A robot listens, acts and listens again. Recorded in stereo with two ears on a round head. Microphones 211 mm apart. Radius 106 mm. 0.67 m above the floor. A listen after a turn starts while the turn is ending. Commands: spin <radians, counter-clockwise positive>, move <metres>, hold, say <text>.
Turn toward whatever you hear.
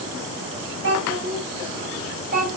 spin -0.61
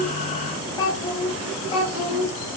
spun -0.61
spin 0.52
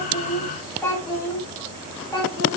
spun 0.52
spin 0.26
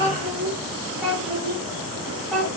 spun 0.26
say Found it: a child speaking, straight ahead, 2 to 4 m away.